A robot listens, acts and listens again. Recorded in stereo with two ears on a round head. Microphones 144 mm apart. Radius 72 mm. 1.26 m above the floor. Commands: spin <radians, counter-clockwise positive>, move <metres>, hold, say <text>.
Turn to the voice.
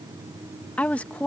spin 0.52
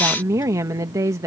spin -0.35
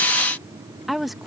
say Facing the woman speaking.